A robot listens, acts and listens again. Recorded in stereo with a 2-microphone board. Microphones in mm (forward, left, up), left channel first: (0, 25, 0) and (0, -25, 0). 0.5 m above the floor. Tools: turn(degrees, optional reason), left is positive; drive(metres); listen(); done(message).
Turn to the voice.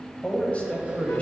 turn(degrees=30, reason="The man speaking: about 30° left or 150° left.")
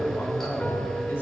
turn(degrees=120, reason="So it is at 120° left.")
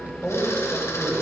turn(degrees=30, reason="The man speaking is now 30° left.")
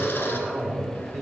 done("Facing the man speaking.")